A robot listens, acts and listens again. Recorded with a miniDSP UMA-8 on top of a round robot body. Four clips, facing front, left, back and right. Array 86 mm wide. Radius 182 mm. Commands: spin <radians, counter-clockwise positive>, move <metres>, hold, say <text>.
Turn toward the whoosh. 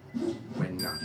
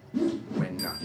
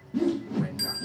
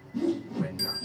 spin 2.53
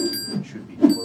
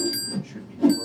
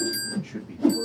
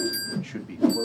say Facing the whoosh, under 1 m away.